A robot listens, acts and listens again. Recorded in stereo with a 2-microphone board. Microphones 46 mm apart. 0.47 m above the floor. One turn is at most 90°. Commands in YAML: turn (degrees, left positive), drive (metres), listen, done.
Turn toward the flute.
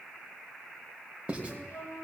turn: 60
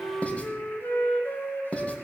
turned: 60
turn: 55
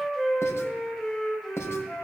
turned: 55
turn: 10
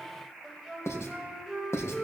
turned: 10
done: "Facing the flute, 2 to 4 m away."